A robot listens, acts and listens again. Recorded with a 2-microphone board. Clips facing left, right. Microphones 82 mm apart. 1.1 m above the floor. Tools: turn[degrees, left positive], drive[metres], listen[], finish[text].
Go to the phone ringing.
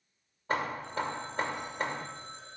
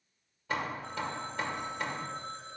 Thought: The phone ringing: about 55° right or 125° right.
Action: turn[-55]
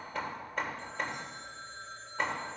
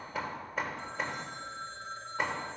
Thought: So it is at 70° right.
Action: turn[-70]
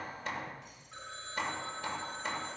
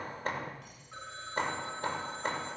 Thought: The phone ringing is now 20° right.
Action: turn[-20]
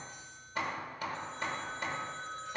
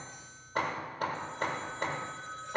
Action: drive[1.0]
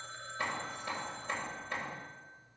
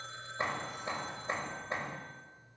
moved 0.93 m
Action: drive[1.0]
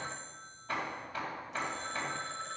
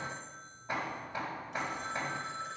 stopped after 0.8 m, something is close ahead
Thought: The phone ringing is now 10° right.
Action: turn[-10]
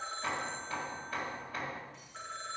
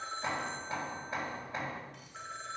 Action: finish[Arrived at the phone ringing, straight ahead.]